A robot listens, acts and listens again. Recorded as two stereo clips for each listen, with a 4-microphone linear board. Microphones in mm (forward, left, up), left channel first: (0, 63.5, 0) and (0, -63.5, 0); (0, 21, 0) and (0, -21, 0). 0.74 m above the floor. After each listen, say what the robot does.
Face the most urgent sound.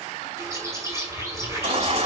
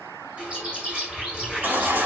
Turn 60° right.
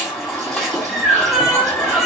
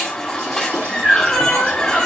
Found it: a baby crying, straight ahead.